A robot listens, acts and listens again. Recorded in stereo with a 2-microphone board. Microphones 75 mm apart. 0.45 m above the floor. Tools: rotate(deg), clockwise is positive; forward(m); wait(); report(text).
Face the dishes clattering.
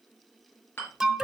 rotate(-30)
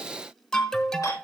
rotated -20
wait()
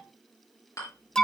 rotate(-130)
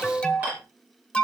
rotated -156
rotate(25)
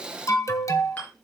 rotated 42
rotate(-20)
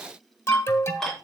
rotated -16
report("Found it: dishes clattering, straight ahead.")